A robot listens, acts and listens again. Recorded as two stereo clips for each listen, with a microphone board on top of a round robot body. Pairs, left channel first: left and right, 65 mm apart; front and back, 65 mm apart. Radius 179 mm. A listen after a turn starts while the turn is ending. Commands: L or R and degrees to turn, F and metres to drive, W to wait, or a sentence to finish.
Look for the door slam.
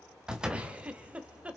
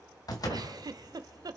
R15
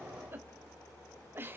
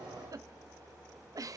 I heard a door slam from this way, but can't make it out now.